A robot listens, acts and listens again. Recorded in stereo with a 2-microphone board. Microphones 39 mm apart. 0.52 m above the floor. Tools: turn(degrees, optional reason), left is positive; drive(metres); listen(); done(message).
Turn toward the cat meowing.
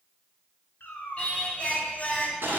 turn(degrees=65, reason="The cat meowing: about 65° left or 115° left.")
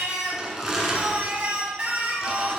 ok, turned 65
listen()
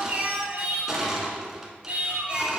listen()
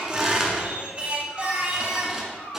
turn(degrees=50, reason="So it is at 50° left.")
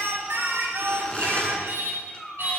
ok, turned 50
done("Facing the cat meowing, under 1 m away.")